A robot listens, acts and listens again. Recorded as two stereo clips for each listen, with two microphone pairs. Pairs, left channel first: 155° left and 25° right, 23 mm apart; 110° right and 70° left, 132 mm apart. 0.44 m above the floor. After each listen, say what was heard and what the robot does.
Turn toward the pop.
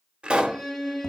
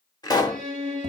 The pop: 50° right. Turn 50° right.
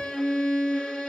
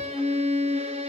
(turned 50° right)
I heard a pop from this way, but can't make it out now.